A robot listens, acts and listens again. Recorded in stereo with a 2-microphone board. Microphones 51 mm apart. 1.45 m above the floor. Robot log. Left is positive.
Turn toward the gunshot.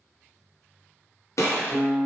cmd yaw +90
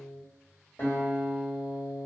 end: I heard a gunshot from this way, but can't make it out now.